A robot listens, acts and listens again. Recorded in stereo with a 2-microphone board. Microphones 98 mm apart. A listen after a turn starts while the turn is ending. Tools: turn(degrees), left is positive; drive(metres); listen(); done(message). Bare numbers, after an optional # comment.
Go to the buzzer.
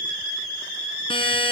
# The buzzer: about 70° left or 110° left.
turn(70)
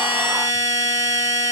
# So it is at 40° left.
turn(40)
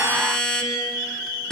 drive(1.0)
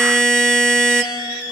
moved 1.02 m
drive(1.0)
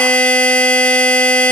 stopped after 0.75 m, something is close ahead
# The buzzer is now 15° left.
turn(15)
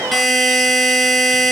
done("I am next to the buzzer.")